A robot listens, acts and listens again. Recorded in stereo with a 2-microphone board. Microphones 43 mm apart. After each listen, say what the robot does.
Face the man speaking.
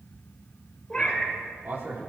Turn 90° right.
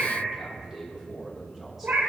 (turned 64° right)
Turn 10° right.
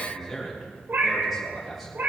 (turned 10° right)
Facing the man speaking.